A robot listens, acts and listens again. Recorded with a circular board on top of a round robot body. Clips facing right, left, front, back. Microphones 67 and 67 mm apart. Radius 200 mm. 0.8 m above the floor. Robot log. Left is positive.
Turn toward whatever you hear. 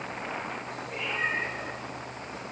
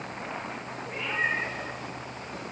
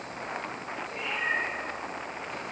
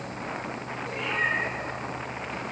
note: The cat meowing: 145° left.
cmd yaw +145
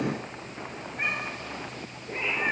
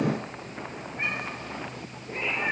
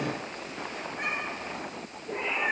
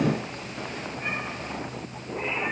note: The cat meowing is now 15° right.
cmd yaw -15
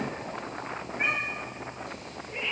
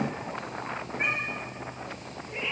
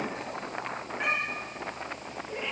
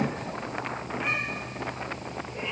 end: Found it: a cat meowing, straight ahead, over 4 m away.